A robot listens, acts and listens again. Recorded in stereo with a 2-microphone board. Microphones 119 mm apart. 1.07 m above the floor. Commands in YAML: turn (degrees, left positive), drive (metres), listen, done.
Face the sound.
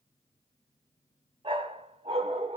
turn: -55
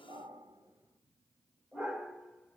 done: "Found it: a dog barking, straight ahead, 1 to 2 m away."